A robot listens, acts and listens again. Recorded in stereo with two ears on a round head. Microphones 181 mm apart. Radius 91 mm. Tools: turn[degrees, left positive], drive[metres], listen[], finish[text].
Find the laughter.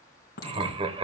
Thought: The laughter: about 30° right or 150° right.
Action: turn[-30]
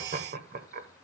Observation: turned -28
Thought: So it is at 120° right.
Action: turn[-120]
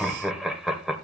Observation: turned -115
Action: finish[Facing the laughter.]